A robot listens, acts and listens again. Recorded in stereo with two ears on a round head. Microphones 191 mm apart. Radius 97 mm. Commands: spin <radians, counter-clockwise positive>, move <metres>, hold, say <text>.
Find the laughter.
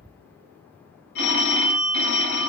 hold
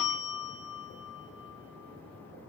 hold
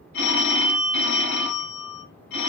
say I can't make out laughter to turn to.